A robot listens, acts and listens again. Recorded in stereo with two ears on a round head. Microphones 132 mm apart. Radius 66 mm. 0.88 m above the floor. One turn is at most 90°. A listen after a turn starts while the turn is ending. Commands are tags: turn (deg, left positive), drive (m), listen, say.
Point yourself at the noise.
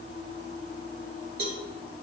<turn deg="-75"/>
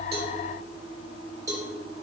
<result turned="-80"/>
<turn deg="-25"/>
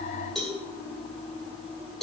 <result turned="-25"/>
<say>Found it: a cowbell, straight ahead, 2 to 4 m away.</say>